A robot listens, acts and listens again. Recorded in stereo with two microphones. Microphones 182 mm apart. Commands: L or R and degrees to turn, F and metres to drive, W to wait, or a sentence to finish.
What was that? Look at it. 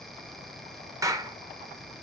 R15
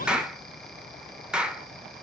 Facing the clap, under 1 m away.